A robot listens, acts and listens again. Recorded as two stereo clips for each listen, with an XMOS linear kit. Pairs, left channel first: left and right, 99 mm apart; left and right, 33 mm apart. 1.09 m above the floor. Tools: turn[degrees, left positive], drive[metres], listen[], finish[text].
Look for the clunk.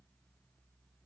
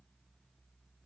Action: listen[]
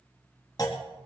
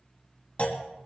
Thought: The clunk: about 40° left or 140° left.
Action: turn[40]
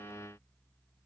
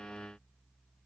Action: listen[]
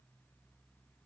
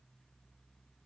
Action: finish[I heard a clunk, but can't make it out now. It was about straight ahead or 100° left.]